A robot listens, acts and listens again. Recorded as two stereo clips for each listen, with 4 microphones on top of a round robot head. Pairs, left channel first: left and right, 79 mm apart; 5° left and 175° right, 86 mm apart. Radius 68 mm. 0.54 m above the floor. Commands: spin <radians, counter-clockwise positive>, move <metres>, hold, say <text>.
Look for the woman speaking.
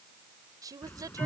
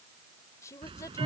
spin -0.96
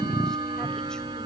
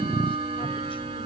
hold
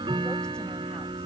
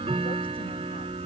hold
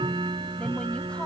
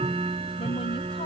say Facing where the woman speaking came from. I can't hear it now.